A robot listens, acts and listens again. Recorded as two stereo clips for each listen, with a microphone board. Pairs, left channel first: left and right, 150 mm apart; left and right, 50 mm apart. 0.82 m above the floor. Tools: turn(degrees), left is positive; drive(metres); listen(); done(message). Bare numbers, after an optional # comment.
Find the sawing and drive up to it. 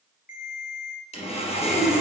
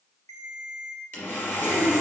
# The sawing: about 45° left or 135° left.
turn(45)
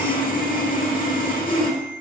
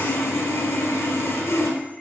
# So it is at 90° left.
turn(90)
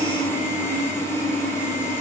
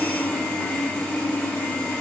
# The sawing is now 15° left.
turn(15)
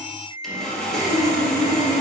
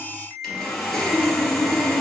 drive(1.0)
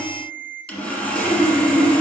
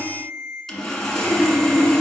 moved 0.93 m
# The sawing is now 10° left.
turn(10)
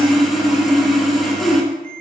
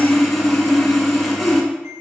drive(1.0)
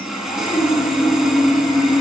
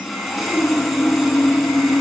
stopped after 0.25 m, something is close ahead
done("Arrived at the sawing, straight ahead.")